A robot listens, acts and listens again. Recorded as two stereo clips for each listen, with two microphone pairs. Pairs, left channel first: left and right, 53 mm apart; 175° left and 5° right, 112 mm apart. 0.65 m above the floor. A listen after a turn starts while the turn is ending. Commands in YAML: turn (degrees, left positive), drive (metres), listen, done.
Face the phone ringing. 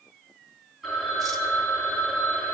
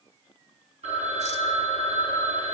done: "Found it: a phone ringing, straight ahead, over 4 m away."